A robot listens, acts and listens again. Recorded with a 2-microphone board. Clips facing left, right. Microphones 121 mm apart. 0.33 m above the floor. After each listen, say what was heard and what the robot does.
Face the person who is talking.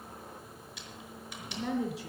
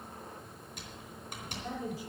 The woman speaking: about 75° left or 105° left. Turn 75° left.
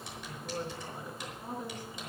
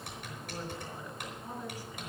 So it is at 20° left. Turn 20° left.
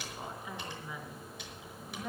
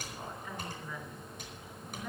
The woman speaking is now 10° left. Turn 10° left.
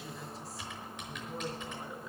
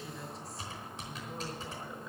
Facing the woman speaking.